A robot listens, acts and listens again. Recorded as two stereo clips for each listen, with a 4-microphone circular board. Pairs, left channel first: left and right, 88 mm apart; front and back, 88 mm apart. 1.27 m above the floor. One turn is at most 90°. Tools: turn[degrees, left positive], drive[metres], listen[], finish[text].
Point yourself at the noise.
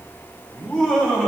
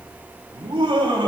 Thought: The laughter: 165° left.
Action: turn[90]
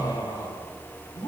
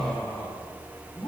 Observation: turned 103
Thought: The laughter is now 55° left.
Action: turn[55]
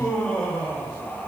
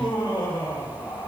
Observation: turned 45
Action: finish[Facing the laughter.]